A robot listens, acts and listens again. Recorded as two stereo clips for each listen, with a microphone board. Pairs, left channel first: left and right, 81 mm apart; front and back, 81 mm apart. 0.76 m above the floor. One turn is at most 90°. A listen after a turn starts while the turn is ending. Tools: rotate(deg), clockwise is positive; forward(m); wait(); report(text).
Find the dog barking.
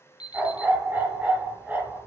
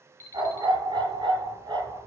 rotate(90)
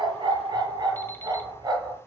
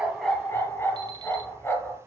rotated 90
rotate(60)
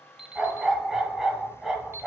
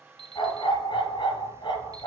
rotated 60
report("Facing the dog barking.")